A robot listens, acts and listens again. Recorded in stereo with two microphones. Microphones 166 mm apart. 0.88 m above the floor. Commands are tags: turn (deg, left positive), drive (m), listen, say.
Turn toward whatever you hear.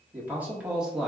<turn deg="30"/>
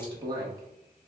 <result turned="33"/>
<turn deg="-20"/>
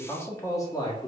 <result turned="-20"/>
<turn deg="25"/>
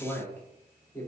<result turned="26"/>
<turn deg="15"/>
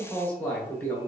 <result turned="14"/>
<turn deg="15"/>
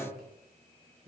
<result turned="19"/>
<say>Facing the man speaking, 2 to 4 m away.</say>